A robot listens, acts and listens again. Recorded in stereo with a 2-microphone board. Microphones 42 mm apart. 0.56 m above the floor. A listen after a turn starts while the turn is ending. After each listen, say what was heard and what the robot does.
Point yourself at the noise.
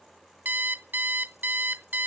The alarm clock: about 60° right or 120° right. Turn 60° right.
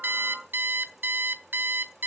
So it is at 55° right. Turn 55° right.
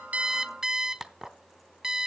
The alarm clock is now 10° right. Turn 10° right.
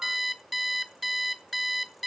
Facing the alarm clock, 1 to 2 m away.